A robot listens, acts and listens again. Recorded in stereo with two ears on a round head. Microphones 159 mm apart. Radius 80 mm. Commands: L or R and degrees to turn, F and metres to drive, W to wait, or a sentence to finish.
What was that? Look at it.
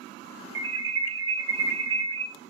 R90
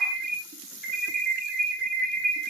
Found it: an alarm, straight ahead.